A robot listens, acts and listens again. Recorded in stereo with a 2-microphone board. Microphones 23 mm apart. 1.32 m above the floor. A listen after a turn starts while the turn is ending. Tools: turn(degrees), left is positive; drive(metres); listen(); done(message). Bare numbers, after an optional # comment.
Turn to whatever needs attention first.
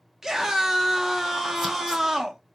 # The scream: about 20° right or 160° right.
turn(-20)
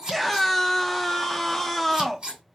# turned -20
done("Facing the scream, under 1 m away.")